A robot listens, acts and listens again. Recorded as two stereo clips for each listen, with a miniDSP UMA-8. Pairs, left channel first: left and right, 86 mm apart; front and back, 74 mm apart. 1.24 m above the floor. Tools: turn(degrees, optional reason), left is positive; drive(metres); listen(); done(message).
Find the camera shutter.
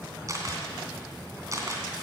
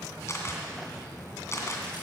turn(degrees=-45, reason="The camera shutter: 45° right.")
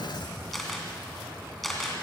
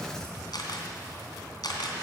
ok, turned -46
done("Facing the camera shutter.")